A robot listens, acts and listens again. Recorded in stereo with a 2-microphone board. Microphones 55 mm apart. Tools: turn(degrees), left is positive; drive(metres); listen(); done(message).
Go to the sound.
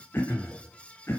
turn(degrees=40)
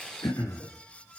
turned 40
turn(degrees=100)
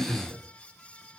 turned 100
turn(degrees=35)
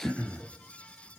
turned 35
turn(degrees=10)
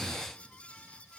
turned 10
listen()
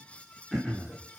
drive(metres=1.0)
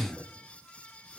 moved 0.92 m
drive(metres=1.0)
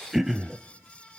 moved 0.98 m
drive(metres=1.0)
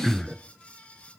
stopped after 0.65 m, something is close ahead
done("I am next to the throat clearing.")